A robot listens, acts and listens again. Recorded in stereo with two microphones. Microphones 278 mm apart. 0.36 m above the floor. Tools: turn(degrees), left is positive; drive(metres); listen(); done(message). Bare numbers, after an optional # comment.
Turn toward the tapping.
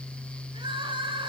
listen()
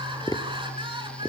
turn(30)
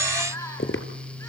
# So it is at 135° left.
turn(135)
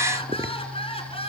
listen()
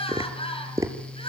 # The tapping is now 10° right.
turn(-10)
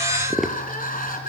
done("Facing the tapping, 1 to 2 m away.")